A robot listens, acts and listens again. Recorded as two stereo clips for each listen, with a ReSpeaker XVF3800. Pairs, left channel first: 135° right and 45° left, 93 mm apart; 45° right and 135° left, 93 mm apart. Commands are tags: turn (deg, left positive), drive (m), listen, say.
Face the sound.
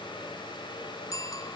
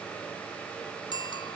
<turn deg="-80"/>
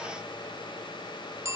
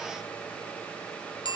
<turn deg="-15"/>
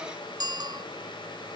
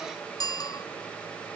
<say>Found it: a bicycle bell, straight ahead.</say>